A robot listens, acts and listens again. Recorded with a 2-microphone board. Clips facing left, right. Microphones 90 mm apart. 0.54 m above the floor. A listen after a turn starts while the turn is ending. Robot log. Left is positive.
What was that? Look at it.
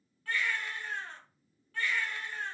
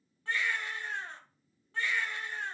note: The baby crying: about 25° right or 155° right.
cmd yaw -25
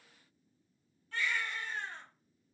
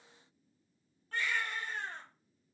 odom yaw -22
note: So it is at 130° right.
cmd yaw -130
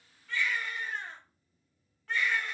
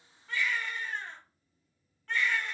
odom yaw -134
end: Found it: a baby crying, straight ahead.